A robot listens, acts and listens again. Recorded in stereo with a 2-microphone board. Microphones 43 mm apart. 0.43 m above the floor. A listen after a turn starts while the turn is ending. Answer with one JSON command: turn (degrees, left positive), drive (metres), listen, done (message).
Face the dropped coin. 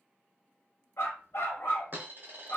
{"turn": -45}
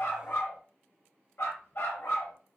{"listen": true}
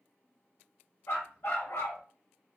{"done": "I heard a dropped coin, but can't make it out now. It was about straight ahead or 90° right."}